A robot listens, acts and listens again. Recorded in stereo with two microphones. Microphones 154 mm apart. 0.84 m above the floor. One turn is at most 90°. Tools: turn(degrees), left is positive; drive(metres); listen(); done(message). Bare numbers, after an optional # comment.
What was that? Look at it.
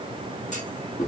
# The clunk: about 50° left or 130° left.
turn(50)
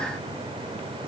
listen()
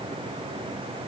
done("I heard a clunk, but can't make it out now. It was about straight ahead or 80° left.")